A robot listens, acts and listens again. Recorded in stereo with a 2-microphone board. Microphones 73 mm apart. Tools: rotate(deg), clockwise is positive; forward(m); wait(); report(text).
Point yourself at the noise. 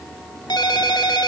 rotate(-90)
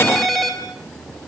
report("Found it: a ringtone, straight ahead.")